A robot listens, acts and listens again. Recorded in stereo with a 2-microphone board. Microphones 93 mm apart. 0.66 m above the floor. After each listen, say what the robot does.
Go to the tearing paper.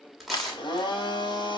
Turn 30° left.
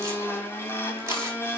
Keep listening.
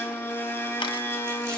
Keep listening.
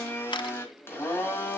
I heard tearing paper, but can't make it out now. It was about 30° right or 150° left. I did not reach it.